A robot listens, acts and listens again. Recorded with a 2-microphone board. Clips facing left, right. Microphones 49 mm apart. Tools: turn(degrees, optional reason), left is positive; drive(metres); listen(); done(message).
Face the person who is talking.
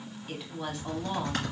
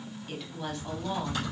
turn(degrees=30)
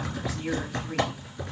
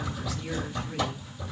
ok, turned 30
listen()
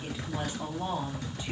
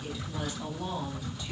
listen()
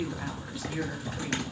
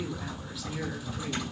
done("I heard a woman speaking, but can't make it out now. It was about 25° right or 145° left.")